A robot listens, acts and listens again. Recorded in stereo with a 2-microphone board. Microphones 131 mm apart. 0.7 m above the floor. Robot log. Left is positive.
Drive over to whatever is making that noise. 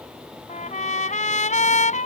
note: The trumpet: about 70° left or 110° left.
cmd yaw +70
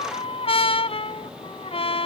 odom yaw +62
note: So it is at 50° left.
cmd yaw +50
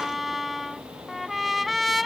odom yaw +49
cmd fwd 1.0
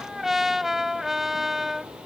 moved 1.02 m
cmd fwd 1.0
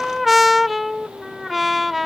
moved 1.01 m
cmd fwd 1.0
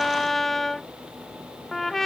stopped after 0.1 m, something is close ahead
end: I am next to the trumpet.